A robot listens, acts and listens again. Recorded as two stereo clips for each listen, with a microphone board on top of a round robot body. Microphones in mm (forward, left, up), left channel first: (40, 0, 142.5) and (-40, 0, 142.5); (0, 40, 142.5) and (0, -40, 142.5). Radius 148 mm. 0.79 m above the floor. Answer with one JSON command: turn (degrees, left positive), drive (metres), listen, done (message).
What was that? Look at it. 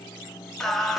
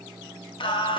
{"turn": 90}
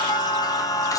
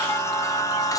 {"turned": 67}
{"turn": 45}
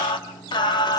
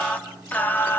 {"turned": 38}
{"turn": 25}
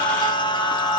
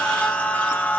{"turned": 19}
{"turn": 25}
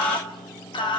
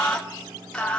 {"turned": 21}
{"turn": 15}
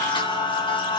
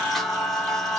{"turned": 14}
{"done": "Found it: singing, straight ahead."}